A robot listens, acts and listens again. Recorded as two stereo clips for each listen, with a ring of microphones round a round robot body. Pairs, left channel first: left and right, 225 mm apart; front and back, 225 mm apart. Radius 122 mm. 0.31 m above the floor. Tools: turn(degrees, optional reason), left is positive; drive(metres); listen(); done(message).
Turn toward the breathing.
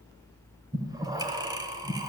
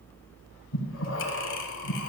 turn(degrees=-20, reason="The breathing: 20° right.")
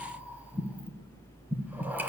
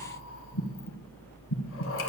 turn(degrees=-10, reason="The breathing is now 10° right.")
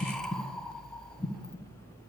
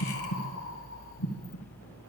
done("Found it: breathing, straight ahead.")